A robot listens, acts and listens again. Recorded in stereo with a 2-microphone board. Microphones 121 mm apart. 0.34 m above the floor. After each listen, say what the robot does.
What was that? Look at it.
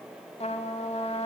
Turn 65° left.
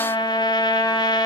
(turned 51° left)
Turn 40° left.
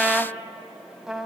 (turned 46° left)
Facing the trumpet.